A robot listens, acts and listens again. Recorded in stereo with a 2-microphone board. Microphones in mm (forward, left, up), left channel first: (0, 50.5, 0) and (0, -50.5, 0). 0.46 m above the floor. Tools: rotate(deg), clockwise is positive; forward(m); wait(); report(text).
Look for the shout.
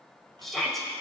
rotate(-30)
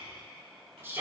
rotate(25)
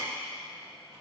wait()
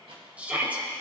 rotate(15)
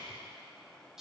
report("Facing the shout.")